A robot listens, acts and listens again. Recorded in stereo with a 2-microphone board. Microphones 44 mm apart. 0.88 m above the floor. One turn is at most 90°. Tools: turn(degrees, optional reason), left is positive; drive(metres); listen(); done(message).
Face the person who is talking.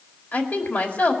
turn(degrees=45, reason="The woman speaking: about 45° left or 135° left.")
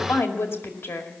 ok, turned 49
turn(degrees=85, reason="So it is at 85° left.")
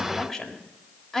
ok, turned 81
done("Found it: a woman speaking, straight ahead.")